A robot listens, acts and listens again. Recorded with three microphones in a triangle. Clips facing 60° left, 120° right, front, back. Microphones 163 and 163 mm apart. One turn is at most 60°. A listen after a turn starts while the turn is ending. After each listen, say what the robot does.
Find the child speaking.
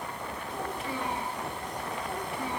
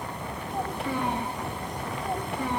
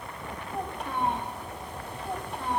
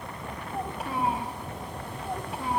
Turn 60° right.
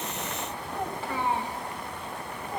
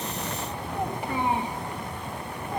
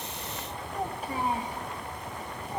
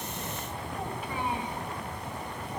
Turn 50° right.
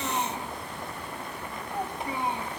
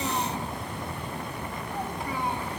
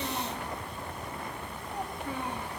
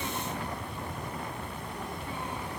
Turn 10° right.
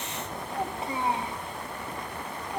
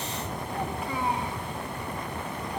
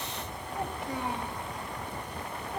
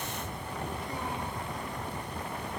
Facing the child speaking, 2 to 4 m away.